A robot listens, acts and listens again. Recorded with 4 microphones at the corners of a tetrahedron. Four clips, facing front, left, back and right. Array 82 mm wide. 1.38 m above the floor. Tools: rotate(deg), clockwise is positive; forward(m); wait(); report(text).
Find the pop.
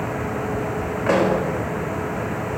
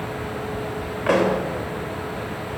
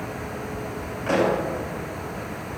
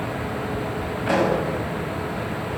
rotate(-55)
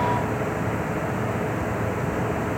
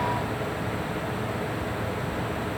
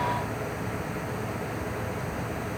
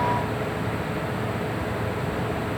report("Facing where the pop came from. I can't hear it now.")